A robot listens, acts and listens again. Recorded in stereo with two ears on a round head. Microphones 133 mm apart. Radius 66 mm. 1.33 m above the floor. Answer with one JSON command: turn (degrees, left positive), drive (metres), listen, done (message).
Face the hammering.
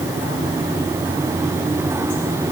{"listen": true}
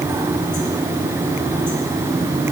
{"listen": true}
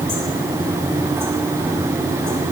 {"done": "I can't make out hammering."}